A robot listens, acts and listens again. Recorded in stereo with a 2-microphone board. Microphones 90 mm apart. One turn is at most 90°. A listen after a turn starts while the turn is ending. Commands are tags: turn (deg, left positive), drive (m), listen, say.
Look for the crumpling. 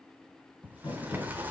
<turn deg="55"/>
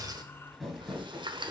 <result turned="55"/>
<say>Found it: crumpling, straight ahead.</say>